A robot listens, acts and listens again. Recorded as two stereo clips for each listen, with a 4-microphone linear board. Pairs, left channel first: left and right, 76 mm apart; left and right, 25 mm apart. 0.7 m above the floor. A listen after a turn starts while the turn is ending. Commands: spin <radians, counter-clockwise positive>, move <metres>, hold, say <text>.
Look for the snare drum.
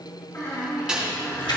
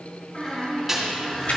spin -0.52
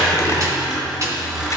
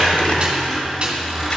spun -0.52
spin -2.44
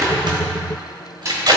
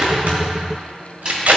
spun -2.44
spin -0.61
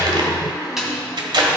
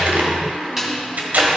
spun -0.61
say Facing the snare drum.